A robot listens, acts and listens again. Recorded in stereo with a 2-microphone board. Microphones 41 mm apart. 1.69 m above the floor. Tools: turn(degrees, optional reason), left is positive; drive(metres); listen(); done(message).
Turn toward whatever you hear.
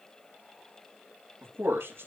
turn(degrees=-90)
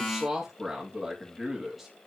turn(degrees=-10, reason="So it is at 10° right.")
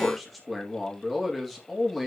done("Facing the man speaking, 2 to 4 m away.")